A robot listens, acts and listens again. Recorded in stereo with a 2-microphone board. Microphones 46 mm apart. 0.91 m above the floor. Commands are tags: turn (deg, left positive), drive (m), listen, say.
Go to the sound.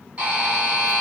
<turn deg="-30"/>
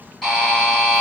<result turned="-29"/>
<drive m="1.0"/>
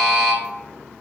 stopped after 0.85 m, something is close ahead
<say>Arrived at the buzzer, straight ahead.</say>